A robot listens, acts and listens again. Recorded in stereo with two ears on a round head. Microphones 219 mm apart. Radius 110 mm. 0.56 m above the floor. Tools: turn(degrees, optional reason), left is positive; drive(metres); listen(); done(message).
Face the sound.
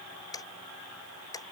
turn(degrees=15, reason="The ticking: about 15° left or 165° left.")
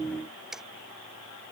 done("Facing the ticking.")